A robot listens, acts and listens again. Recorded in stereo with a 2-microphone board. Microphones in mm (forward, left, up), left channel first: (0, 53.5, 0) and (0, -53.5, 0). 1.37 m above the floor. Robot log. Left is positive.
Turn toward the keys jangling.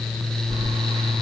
note: The keys jangling: about 25° right or 155° right.
cmd yaw -25
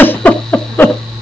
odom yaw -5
note: The keys jangling: about 20° right or 160° right.
cmd yaw -20
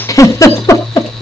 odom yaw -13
end: Facing the keys jangling, over 4 m away.